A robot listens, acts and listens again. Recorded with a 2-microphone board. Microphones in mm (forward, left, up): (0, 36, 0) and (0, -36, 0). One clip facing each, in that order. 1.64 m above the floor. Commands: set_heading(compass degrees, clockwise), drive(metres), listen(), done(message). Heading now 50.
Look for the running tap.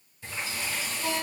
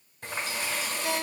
set_heading(115)
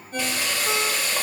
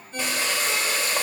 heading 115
set_heading(140)
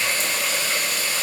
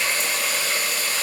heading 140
done("Found it: a running tap, straight ahead.")